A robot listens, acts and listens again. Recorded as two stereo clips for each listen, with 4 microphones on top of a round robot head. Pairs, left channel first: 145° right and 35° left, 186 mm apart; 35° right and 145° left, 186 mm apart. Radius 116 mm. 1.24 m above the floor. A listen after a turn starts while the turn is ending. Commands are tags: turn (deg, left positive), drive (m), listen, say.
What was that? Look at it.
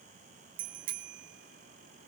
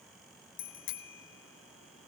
<turn deg="-10"/>
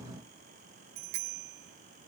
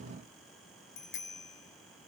<say>Facing the bicycle bell, 2 to 4 m away.</say>